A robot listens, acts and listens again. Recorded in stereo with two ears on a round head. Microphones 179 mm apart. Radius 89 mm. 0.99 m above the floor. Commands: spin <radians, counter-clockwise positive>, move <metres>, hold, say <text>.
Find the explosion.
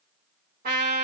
hold
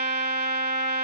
hold
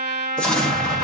spin 0.52
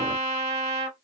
hold
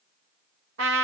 say I heard an explosion, but can't make it out now. It was about 25° right or 145° left.